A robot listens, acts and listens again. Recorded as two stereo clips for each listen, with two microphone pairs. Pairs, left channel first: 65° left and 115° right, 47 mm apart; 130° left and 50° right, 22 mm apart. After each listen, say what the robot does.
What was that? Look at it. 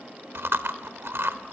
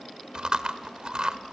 Turn 95° right.
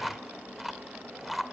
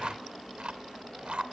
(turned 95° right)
Turn 25° right.
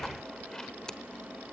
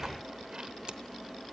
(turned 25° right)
Keep listening.
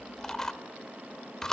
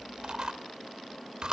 Turn 10° right.
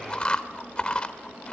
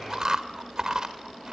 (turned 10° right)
Found it: chewing, straight ahead.